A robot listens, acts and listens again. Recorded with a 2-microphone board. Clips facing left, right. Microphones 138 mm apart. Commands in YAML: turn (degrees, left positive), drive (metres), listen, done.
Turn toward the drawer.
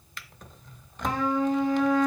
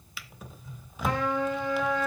turn: -30
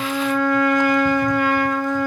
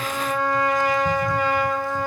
listen: true
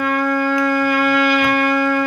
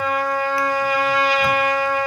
listen: true
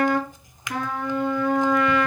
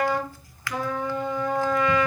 turn: 20
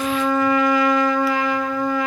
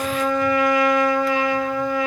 listen: true
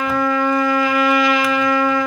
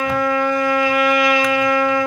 listen: true
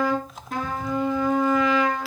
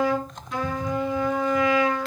done: "Facing the drawer, 1 to 2 m away."